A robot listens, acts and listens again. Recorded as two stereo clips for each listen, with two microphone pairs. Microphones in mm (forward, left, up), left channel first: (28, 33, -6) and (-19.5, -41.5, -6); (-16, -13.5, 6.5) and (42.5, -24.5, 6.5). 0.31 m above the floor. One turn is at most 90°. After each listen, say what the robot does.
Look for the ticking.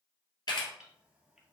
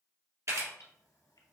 Turn 90° left.
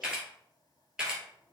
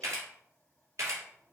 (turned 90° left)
Turn 65° left.
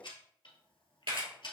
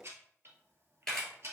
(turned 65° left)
Turn 30° left.
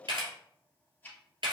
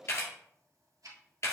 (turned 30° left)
Turn 15° right.
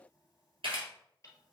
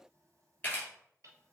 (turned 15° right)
Keep listening.
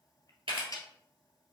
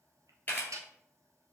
Found it: ticking, straight ahead, 1 to 2 m away.